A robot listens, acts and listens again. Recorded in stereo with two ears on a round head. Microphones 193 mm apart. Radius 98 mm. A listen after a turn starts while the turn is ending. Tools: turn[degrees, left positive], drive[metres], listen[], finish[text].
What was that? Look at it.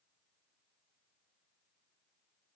Action: listen[]
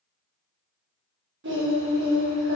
Thought: The singing: about 60° right or 120° right.
Action: turn[-60]
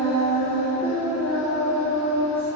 Thought: So it is at 10° left.
Action: turn[10]
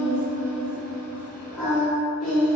Action: finish[Found it: singing, straight ahead, 1 to 2 m away.]